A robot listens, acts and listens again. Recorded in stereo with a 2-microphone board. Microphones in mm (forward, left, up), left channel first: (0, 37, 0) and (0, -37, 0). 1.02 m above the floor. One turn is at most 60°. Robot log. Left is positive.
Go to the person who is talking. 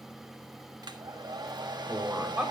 cmd yaw -30
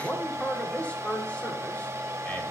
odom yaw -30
note: So it is at 15° left.
cmd yaw +15
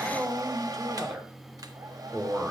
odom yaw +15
cmd fwd 1.0
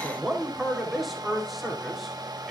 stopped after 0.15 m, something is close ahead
end: Blocked. The man speaking is further on, straight ahead.